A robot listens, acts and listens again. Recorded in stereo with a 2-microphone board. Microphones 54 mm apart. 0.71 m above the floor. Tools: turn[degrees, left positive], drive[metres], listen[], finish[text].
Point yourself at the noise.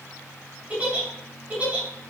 Thought: The giggle: about 25° right or 155° right.
Action: turn[-25]
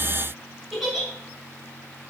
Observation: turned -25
Action: finish[Found it: a giggle, straight ahead, 2 to 4 m away.]